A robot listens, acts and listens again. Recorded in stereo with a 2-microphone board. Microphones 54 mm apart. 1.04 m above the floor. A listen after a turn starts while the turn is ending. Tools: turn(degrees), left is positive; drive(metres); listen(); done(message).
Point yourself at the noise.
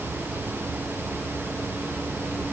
listen()
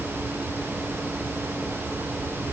listen()
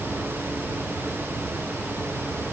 done("I can't make out anything to turn to.")